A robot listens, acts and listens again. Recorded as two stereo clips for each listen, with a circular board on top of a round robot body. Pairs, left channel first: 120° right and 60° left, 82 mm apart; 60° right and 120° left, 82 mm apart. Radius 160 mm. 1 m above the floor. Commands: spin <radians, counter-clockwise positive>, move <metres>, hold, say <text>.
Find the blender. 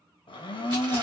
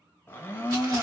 spin -2.18
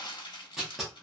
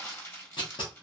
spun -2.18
hold
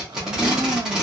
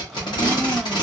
spin 0.61
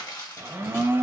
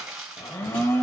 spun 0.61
say Facing the blender, under 1 m away.